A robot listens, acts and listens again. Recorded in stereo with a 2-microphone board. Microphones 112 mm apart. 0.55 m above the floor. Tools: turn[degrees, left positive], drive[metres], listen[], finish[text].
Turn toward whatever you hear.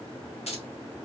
Thought: The keys jangling: about 70° left or 110° left.
Action: turn[70]
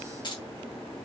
Thought: So it is at 45° left.
Action: turn[45]
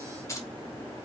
Thought: The keys jangling is now 30° left.
Action: turn[30]
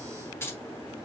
Thought: The keys jangling is now 25° left.
Action: turn[25]
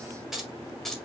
Action: finish[Facing the keys jangling, 1 to 2 m away.]